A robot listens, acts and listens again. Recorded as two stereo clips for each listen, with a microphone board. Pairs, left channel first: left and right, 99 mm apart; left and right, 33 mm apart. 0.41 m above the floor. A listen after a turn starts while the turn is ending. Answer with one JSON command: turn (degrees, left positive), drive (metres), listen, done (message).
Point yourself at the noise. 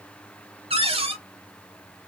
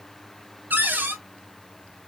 {"turn": -75}
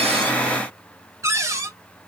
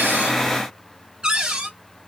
{"turn": -30}
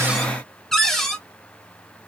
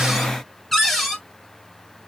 {"done": "Facing the cupboard door, 1 to 2 m away."}